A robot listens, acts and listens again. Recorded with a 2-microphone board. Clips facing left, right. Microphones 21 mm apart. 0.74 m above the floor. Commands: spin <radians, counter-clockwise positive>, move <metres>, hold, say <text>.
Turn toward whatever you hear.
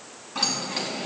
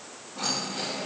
spin 1.57
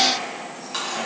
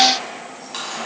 say Facing the keys jangling, over 4 m away.